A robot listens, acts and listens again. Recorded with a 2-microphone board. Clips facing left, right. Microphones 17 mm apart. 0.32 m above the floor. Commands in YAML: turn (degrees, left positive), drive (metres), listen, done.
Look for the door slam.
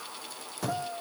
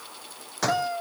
turn: -65
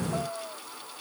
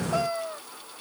listen: true
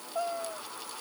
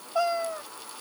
done: "I heard a door slam, but can't make it out now. It was about straight ahead or 50° right."